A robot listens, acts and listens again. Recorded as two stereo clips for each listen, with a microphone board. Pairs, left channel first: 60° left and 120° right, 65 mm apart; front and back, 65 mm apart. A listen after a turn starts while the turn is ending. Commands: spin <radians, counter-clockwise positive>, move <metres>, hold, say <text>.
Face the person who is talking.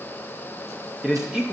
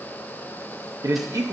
spin 2.79
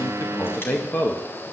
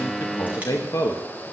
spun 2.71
say Found it: a man speaking, straight ahead.